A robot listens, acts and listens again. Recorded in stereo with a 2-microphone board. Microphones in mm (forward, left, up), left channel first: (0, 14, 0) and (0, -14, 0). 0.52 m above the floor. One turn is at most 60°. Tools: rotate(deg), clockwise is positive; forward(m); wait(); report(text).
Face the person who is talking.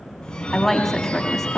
rotate(-30)
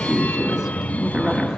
wait()
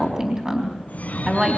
rotate(25)
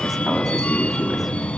wait()
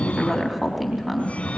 report("Found it: a woman speaking, straight ahead.")